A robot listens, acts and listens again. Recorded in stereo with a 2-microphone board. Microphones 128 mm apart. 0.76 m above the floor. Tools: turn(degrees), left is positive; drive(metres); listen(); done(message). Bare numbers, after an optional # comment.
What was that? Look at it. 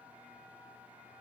listen()
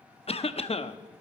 # The cough: about 50° left or 130° left.
turn(50)
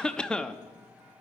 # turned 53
done("Facing the cough.")